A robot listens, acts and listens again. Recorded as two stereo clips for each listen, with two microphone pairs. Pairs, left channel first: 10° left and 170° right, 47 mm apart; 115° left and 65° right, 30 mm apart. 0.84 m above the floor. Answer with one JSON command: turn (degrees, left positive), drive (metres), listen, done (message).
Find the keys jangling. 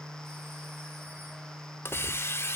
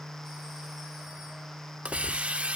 {"listen": true}
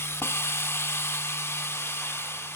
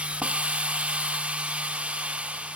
{"listen": true}
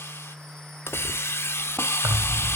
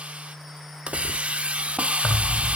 {"turn": 165}
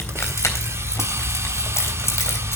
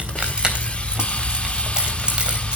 {"turn": -10}
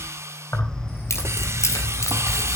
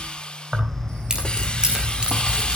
{"done": "Found it: keys jangling, straight ahead, 2 to 4 m away."}